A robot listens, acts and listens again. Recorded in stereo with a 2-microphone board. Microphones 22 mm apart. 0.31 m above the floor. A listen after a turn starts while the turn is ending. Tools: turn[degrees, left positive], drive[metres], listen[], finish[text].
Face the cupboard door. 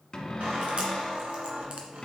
Thought: The cupboard door: about 30° left or 150° left.
Action: turn[30]
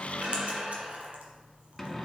Action: finish[Facing the cupboard door.]